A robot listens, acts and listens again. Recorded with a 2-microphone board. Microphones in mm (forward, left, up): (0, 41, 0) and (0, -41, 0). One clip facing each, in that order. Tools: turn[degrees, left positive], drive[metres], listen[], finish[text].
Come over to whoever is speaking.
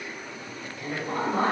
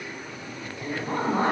Thought: The woman speaking: about 25° right or 155° right.
Action: turn[-25]
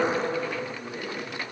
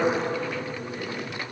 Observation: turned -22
Thought: So it is at 130° right.
Action: turn[-130]
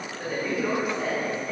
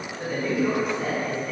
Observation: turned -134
Action: drive[1.0]
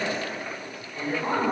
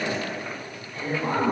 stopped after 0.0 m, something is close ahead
Thought: The woman speaking is now 10° left.
Action: turn[10]
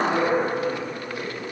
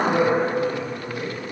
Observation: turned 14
Action: finish[Blocked. The woman speaking is further on, straight ahead.]